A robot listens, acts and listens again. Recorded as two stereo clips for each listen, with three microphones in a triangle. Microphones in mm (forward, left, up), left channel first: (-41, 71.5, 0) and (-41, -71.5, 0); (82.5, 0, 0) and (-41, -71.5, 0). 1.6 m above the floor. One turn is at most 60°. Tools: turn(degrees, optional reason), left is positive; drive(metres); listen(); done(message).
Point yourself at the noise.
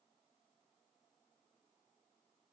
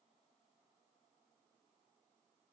listen()
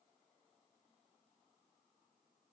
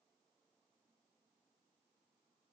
listen()
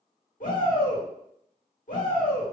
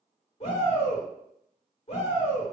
turn(degrees=60, reason="The shout: 70° left.")
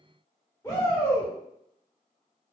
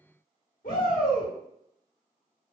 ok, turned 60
turn(degrees=20, reason="The shout is now 20° left.")
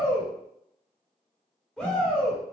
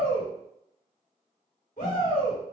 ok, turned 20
done("Facing the shout.")